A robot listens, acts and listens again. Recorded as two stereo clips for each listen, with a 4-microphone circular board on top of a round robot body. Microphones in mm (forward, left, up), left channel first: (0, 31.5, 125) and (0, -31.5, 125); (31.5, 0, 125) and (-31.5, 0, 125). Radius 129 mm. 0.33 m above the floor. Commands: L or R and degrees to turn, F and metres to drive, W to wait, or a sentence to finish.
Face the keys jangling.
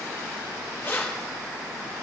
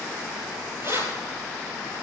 L145
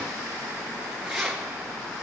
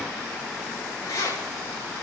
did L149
Found it: keys jangling, straight ahead.